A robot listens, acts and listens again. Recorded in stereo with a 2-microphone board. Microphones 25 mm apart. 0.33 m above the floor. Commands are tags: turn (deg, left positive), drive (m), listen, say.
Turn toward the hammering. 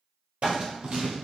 <turn deg="-75"/>
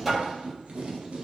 <say>Found it: hammering, straight ahead, 1 to 2 m away.</say>